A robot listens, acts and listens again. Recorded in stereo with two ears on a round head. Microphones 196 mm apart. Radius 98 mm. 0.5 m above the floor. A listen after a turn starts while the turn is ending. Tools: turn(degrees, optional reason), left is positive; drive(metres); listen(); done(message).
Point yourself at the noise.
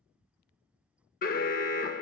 turn(degrees=45, reason="The alarm: about 45° left or 135° left.")
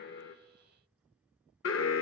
turn(degrees=85, reason="So it is at 85° left.")
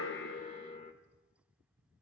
turn(degrees=35, reason="The alarm is now 35° left.")
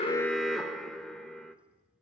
done("Facing the alarm.")